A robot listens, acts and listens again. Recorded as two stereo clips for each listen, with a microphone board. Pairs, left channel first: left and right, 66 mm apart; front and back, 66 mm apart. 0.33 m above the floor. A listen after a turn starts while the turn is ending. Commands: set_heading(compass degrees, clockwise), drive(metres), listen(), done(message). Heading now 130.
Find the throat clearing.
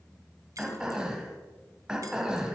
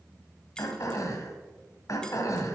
set_heading(145)
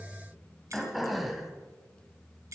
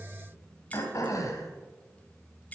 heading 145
done("Facing the throat clearing, 1 to 2 m away.")